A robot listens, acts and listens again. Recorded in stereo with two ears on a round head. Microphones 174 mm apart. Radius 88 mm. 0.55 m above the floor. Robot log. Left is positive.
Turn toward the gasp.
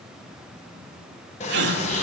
note: The gasp: about 55° right or 125° right.
cmd yaw -55
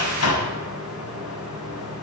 cmd idle
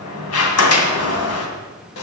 end: I heard a gasp, but can't make it out now. It was about straight ahead or 70° right.